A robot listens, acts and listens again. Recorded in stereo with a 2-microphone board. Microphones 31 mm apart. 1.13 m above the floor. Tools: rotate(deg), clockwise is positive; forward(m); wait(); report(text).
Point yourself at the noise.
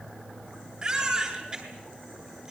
rotate(25)
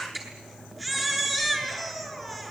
report("Facing the baby crying, over 4 m away.")